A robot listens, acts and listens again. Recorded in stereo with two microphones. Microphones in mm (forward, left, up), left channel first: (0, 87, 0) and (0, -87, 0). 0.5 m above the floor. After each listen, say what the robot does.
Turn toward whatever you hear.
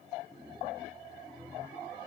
Keep listening.
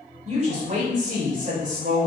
Turn 55° right.
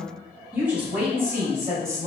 Turn 20° right.
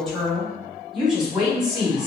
Facing the woman speaking, 2 to 4 m away.